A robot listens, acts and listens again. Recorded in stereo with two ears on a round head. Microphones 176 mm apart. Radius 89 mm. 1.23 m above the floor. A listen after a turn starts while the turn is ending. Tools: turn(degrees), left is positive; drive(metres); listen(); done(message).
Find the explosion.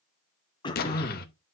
turn(degrees=50)
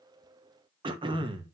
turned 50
listen()
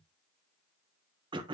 done("I heard an explosion, but can't make it out now. It was about straight ahead or 80° left.")